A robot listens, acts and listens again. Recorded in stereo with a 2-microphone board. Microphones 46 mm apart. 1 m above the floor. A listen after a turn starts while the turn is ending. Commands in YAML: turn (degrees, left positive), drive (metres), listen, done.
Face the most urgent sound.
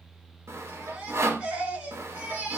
turn: -30
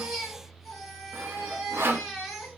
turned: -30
done: "Found it: a baby crying, straight ahead, over 4 m away."